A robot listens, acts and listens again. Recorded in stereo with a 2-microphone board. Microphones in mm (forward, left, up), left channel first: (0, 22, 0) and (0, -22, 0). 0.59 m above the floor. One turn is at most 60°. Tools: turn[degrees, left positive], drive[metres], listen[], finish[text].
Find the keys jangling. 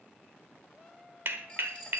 Thought: The keys jangling: about 20° left or 160° left.
Action: turn[20]
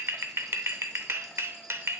Action: listen[]
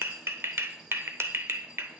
Action: listen[]
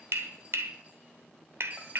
Thought: So it is at 30° right.
Action: turn[-30]
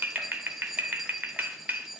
Action: finish[Facing the keys jangling, 2 to 4 m away.]